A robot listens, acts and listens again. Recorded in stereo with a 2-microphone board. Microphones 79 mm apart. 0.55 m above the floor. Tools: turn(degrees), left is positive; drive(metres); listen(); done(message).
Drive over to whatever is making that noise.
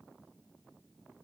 listen()
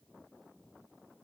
listen()
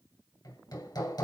turn(degrees=65)
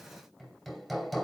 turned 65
drive(metres=1.0)
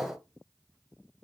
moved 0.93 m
drive(metres=1.0)
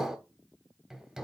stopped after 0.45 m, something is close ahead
done("Arrived at the hammering, straight ahead.")